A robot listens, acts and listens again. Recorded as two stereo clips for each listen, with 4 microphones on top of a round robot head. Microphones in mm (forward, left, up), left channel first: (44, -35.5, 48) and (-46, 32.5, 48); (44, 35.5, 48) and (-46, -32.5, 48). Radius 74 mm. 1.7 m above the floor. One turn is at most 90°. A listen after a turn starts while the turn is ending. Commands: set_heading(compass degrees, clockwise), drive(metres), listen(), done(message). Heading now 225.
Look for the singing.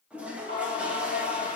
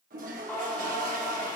set_heading(260)
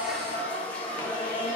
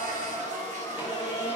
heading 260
set_heading(270)
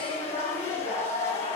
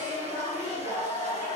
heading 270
set_heading(260)
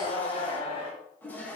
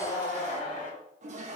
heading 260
set_heading(250)
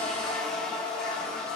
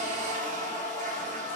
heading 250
set_heading(230)
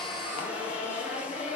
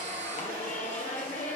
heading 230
done("Found it: singing, straight ahead.")